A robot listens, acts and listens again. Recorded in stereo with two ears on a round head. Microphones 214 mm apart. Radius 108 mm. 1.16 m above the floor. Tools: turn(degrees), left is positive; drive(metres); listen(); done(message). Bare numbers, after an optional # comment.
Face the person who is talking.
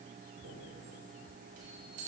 listen()
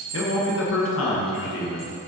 # The man speaking: about 60° left or 120° left.
turn(60)
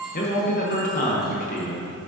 # So it is at 40° left.
turn(40)
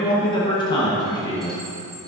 # The man speaking is now 20° left.
turn(20)
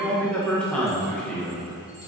done("Found it: a man speaking, straight ahead.")